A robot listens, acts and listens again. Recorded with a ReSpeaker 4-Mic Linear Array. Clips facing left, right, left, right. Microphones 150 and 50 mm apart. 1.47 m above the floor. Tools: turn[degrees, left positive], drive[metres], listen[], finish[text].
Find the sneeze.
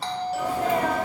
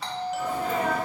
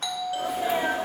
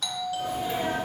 Action: turn[90]
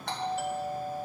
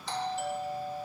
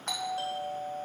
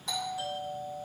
Action: finish[I heard a sneeze from this way, but can't make it out now.]